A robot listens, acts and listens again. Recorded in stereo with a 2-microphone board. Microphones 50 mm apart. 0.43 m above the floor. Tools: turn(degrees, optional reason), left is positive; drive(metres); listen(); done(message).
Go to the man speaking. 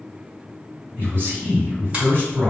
turn(degrees=-50, reason="The man speaking: about 50° right or 130° right.")
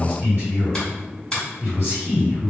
turn(degrees=-60, reason="So it is at 60° right.")
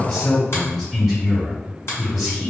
drive(metres=1.0)
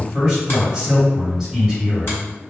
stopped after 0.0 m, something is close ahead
turn(degrees=-15, reason="The man speaking is now 15° right.")
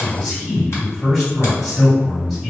done("Something is in my way. I am facing the man speaking but have not reached it.")